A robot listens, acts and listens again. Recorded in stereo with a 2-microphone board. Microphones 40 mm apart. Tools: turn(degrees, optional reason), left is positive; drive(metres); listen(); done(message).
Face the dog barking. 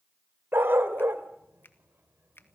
turn(degrees=-60, reason="The dog barking: about 60° right or 120° right.")
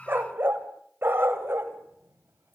turn(degrees=-65, reason="So it is at 65° right.")
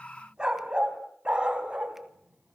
turn(degrees=-25, reason="The dog barking is now 25° right.")
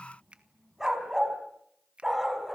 turn(degrees=-10, reason="The dog barking is now 10° right.")
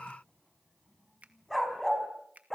done("Facing the dog barking, over 4 m away.")